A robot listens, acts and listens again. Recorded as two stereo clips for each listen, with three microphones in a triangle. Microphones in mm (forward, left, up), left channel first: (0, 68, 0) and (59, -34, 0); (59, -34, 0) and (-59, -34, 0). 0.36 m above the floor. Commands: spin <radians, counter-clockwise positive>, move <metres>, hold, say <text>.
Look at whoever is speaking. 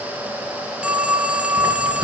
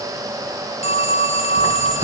hold
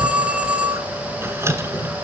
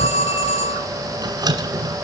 hold
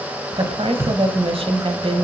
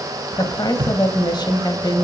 spin -0.79
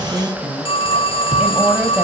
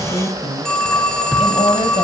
spin 0.35
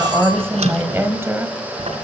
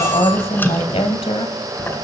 say Facing the woman speaking.